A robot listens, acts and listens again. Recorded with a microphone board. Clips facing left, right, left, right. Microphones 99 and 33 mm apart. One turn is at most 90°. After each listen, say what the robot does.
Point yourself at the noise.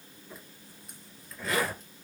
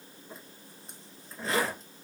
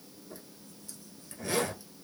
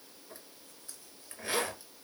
Turn 30° right.
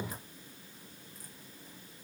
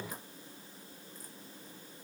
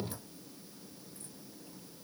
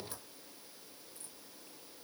Keep listening.
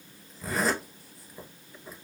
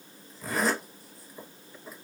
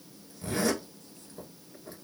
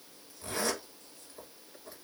Found it: a zipper, straight ahead, 1 to 2 m away.